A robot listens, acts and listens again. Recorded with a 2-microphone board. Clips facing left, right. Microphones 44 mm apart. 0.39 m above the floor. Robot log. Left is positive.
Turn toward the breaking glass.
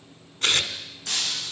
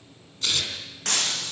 note: The breaking glass: about 65° right or 115° right.
cmd yaw -65
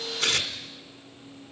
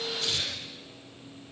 cmd idle
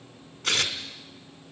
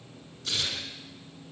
end: I heard breaking glass, but can't make it out now. It was about straight ahead or 50° right.